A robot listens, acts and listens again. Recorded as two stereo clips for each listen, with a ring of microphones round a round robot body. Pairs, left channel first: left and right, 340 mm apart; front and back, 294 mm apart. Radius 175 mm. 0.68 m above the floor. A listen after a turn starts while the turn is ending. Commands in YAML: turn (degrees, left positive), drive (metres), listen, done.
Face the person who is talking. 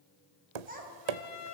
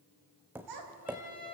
turn: -155
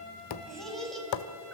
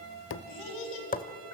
done: "Found it: a child speaking, straight ahead."